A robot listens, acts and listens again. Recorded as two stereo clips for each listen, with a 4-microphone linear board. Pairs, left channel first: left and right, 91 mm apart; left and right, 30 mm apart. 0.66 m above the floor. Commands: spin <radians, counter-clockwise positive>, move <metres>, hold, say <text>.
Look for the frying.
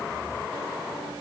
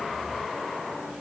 hold
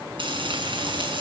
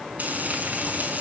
spin -1.22
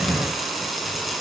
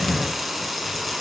say Found it: frying, straight ahead.